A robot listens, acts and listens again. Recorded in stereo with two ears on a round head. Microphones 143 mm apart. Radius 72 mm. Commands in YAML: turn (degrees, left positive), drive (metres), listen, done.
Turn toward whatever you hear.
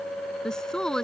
turn: 30
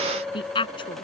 turn: 145
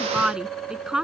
done: "Found it: a woman speaking, straight ahead."